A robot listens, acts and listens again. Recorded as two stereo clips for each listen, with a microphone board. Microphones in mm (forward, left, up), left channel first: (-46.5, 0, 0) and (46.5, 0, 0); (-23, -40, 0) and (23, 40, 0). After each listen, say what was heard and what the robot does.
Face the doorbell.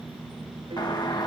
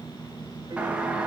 The doorbell: 135° left. Turn 135° left.
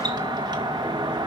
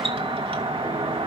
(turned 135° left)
The doorbell is now 45° left. Turn 45° left.
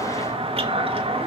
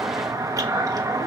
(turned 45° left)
Facing the doorbell.